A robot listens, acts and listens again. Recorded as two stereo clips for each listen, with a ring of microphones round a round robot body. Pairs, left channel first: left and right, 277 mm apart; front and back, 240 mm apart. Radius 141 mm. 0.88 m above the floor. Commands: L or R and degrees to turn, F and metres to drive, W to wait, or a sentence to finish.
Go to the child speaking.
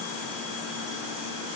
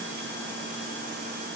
W
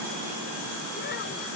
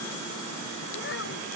W
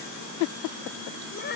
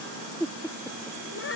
L35
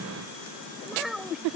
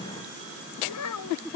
F1.0
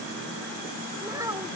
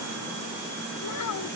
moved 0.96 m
R10
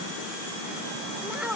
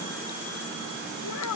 F1.0
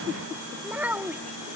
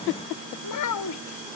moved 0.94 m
F1.0
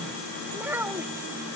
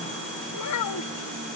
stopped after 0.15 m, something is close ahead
Arrived at the child speaking, straight ahead.